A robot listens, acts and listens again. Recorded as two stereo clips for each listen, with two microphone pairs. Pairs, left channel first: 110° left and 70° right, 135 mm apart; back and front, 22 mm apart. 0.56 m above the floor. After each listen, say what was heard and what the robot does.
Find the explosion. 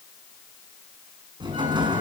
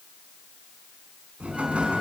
The explosion: 10° right. Turn 10° right.
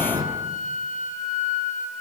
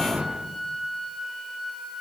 Found it: an explosion, straight ahead.